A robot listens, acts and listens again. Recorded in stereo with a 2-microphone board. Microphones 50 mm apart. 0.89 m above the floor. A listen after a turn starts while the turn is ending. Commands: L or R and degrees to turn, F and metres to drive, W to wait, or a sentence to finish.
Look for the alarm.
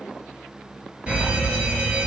R25
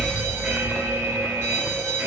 R130
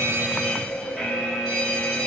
Found it: an alarm, straight ahead.